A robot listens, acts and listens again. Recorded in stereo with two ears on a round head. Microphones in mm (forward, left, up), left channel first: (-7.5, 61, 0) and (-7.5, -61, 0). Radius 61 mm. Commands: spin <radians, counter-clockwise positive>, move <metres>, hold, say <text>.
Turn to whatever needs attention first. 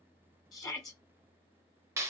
spin 0.52
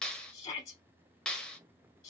spin 2.44
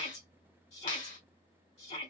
spin 0.96
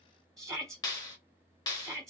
say Found it: a shout, straight ahead, 2 to 4 m away.